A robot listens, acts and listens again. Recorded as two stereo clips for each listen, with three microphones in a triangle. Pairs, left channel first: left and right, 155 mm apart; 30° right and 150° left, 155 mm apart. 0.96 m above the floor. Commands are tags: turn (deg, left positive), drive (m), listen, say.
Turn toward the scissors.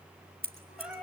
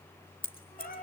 <turn deg="-85"/>
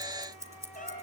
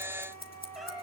<turn deg="-20"/>
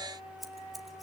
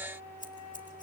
<listen/>
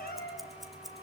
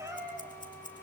<listen/>
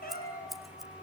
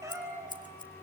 <say>Facing the scissors, 1 to 2 m away.</say>